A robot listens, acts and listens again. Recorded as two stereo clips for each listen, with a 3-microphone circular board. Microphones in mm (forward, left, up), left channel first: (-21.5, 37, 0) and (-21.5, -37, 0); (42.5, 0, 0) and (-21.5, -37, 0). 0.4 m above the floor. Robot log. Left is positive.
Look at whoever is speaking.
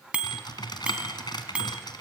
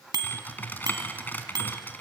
cmd idle
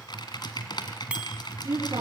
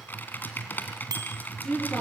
note: The woman speaking: 55° right.
cmd yaw -55
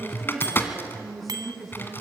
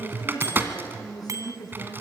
end: Facing the woman speaking.